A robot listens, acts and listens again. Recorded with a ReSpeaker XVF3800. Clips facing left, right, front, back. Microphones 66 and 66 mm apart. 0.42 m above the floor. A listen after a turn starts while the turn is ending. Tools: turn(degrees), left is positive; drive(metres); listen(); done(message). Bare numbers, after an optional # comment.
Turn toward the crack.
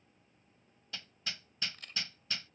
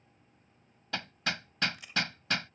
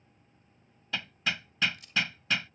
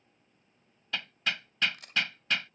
# The crack: 170° right.
turn(-170)
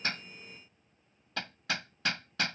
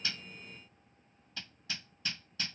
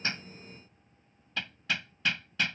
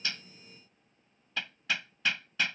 done("I heard a crack from this way, but can't make it out now.")